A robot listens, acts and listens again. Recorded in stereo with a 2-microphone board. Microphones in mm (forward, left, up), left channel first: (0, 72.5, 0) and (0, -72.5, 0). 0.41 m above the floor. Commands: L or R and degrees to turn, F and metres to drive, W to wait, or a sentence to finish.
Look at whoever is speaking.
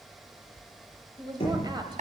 R30
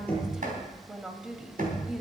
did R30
Found it: a woman speaking, straight ahead.